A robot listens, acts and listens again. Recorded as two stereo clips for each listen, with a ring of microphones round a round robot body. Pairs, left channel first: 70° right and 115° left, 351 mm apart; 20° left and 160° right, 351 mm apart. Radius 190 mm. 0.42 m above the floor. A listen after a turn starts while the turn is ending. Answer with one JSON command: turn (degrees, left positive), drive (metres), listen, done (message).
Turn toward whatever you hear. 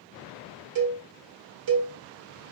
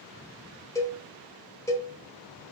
{"turn": 105}
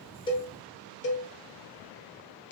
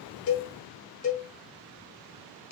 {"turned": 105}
{"turn": -15}
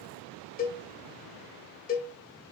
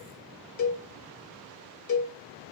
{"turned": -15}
{"done": "Found it: a cowbell, straight ahead, 1 to 2 m away."}